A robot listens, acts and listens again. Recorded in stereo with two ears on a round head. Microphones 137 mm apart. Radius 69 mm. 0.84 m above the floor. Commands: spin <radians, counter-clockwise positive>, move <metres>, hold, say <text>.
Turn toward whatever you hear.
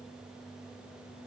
hold
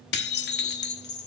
spin 1.31
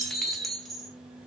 say Found it: dishes clattering, straight ahead.